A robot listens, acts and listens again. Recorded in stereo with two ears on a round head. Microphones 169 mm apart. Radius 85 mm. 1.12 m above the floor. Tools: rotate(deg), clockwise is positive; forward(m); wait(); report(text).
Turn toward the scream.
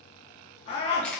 rotate(-30)
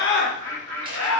rotate(-120)
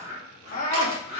rotate(-40)
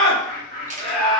report("Found it: a scream, straight ahead, 1 to 2 m away.")